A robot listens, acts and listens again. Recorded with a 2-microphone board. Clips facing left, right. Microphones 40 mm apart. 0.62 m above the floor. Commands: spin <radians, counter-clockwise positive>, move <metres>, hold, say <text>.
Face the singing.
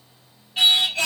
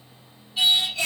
spin 1.05
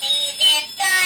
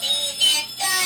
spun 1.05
spin 0.70
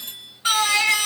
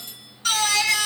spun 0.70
spin 0.52
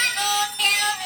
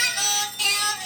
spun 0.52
spin 0.61
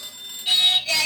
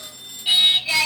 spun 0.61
spin -0.17
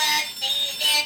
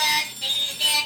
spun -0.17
say Facing the singing, 1 to 2 m away.